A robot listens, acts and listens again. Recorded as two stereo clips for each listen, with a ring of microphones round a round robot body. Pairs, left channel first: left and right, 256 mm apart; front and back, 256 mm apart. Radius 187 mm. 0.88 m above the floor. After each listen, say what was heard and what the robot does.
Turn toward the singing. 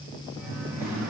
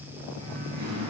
The singing: 165° right. Turn 165° right.
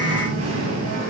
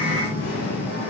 The singing is now 65° right. Turn 65° right.
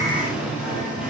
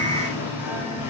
Found it: singing, straight ahead.